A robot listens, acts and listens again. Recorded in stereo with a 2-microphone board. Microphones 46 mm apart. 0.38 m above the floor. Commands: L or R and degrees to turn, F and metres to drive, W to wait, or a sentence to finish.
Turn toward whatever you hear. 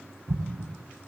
R90
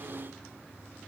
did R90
I heard an explosion from this way, but can't make it out now.